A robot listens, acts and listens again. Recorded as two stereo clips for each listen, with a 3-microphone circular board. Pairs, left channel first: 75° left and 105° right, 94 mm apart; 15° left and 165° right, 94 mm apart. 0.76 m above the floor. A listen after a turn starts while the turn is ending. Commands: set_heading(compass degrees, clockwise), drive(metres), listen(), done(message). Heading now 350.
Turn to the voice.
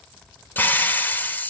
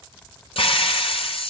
listen()
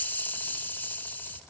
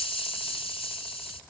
listen()
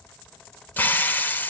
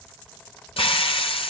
done("I can't make out anyone speaking, only a hiss.")